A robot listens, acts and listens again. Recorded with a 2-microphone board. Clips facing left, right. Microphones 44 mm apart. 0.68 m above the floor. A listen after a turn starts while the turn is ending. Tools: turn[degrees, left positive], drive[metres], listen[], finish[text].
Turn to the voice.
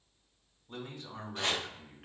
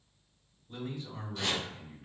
Thought: The man speaking: about 70° left or 110° left.
Action: turn[70]
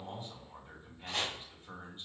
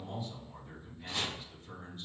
Thought: So it is at 35° left.
Action: turn[35]
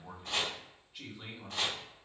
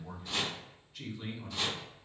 Thought: The man speaking is now 15° left.
Action: turn[15]
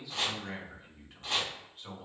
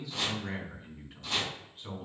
Action: finish[Facing the man speaking.]